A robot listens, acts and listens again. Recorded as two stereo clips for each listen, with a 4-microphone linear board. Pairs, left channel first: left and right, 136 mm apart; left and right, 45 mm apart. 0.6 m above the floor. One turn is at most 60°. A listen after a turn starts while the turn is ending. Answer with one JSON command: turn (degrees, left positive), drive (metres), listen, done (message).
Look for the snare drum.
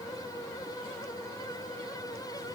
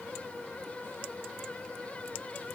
{"listen": true}
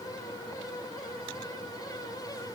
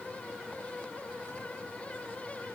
{"listen": true}
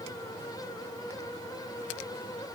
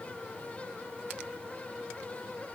{"done": "I can't make out a snare drum."}